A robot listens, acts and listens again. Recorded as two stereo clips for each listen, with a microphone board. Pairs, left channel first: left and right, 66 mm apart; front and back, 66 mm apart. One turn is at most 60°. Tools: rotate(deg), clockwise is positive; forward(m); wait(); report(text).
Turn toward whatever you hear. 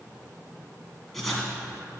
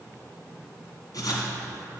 report("Facing the writing.")